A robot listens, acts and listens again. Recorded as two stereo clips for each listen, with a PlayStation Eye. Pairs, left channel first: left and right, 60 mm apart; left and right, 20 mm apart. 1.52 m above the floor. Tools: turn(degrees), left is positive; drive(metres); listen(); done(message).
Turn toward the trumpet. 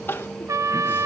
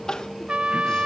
turn(degrees=-60)
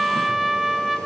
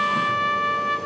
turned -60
done("Facing the trumpet, under 1 m away.")